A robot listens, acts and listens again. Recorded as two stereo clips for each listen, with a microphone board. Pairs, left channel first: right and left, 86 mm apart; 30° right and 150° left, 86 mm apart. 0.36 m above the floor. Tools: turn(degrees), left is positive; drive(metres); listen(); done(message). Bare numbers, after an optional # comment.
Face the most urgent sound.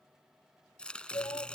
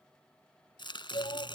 # The shout: 50° right.
turn(-50)
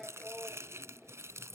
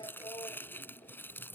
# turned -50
done("Facing the shout.")